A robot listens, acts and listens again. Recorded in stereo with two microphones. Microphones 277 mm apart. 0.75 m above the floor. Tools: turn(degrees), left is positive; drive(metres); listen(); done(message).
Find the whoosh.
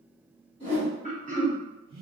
turn(degrees=-65)
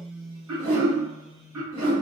turn(degrees=-50)
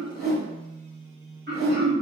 done("Facing the whoosh.")